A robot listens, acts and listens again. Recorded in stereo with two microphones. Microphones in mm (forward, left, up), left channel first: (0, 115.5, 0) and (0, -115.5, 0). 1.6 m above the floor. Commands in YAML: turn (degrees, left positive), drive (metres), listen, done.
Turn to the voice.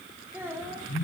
turn: -30
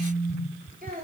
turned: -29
turn: -140
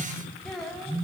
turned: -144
done: "Found it: a child speaking, straight ahead, 2 to 4 m away."